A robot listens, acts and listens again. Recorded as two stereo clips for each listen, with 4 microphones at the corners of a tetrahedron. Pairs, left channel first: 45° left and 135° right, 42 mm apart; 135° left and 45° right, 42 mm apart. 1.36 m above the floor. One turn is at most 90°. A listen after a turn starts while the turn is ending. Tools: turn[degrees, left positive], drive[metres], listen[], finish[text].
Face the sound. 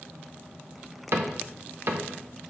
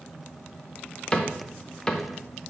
Thought: The cupboard door: 160° right.
Action: turn[-90]
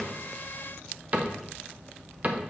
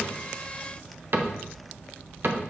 Thought: The cupboard door is now 80° right.
Action: turn[-80]
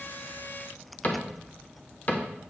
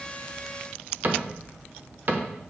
Action: finish[Found it: a cupboard door, straight ahead.]